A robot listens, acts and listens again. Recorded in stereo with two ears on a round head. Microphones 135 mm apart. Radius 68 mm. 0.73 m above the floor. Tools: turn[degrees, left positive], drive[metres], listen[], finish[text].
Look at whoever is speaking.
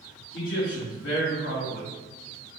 Thought: The man speaking: about 60° left or 120° left.
Action: turn[60]
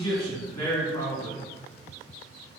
Thought: So it is at 20° left.
Action: turn[20]
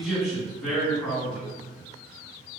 Action: finish[Found it: a man speaking, straight ahead, 2 to 4 m away.]